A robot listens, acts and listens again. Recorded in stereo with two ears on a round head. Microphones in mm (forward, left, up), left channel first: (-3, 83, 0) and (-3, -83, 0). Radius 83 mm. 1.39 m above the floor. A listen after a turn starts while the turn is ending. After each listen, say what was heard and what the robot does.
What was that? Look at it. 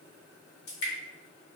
The dripping: about 60° left or 120° left. Turn 60° left.
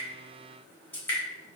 So it is at 10° left. Turn 10° left.
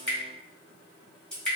Found it: dripping, straight ahead.